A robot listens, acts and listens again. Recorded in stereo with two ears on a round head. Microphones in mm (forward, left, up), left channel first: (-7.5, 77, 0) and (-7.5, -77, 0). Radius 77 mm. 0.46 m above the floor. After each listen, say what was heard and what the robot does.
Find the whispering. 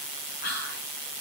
The whispering: about 60° left or 120° left. Turn 60° left.
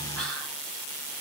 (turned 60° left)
Keep listening.
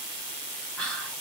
Facing the whispering.